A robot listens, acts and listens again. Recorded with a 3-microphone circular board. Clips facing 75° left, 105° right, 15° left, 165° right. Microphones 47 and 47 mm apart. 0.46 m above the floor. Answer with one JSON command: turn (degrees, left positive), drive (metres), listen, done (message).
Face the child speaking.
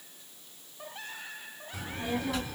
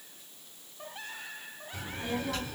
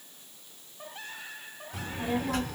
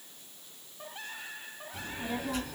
{"done": "Found it: a child speaking, straight ahead."}